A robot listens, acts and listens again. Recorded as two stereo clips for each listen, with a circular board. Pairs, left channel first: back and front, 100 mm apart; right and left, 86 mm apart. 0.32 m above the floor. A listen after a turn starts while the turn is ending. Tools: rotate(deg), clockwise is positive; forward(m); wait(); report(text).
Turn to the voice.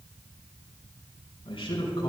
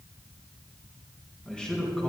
rotate(170)
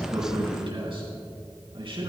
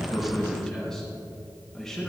report("Facing the man speaking.")